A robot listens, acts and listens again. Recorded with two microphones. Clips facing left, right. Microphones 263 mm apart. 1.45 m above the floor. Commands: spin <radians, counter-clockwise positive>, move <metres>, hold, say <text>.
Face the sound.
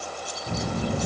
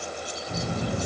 spin 1.22
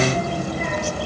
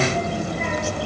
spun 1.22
say Found it: a child speaking, straight ahead, over 4 m away.